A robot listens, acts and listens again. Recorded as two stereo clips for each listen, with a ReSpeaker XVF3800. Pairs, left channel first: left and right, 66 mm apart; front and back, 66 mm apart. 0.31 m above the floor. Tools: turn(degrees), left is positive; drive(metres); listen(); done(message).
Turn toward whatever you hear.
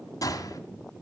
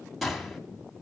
turn(degrees=90)
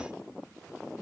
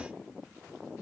done("I heard a gunshot from this way, but can't make it out now.")